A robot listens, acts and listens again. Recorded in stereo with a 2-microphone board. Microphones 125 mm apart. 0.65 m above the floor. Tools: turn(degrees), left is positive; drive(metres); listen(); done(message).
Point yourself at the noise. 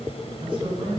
turn(degrees=-45)
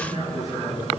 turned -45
turn(degrees=-100)
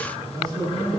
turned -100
turn(degrees=-30)
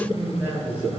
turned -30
turn(degrees=-15)
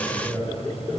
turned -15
done("Facing the man speaking.")